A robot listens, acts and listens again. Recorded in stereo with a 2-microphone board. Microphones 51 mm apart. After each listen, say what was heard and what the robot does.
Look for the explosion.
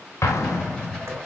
Turn 90° left.
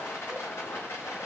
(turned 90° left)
I heard an explosion from this way, but can't make it out now.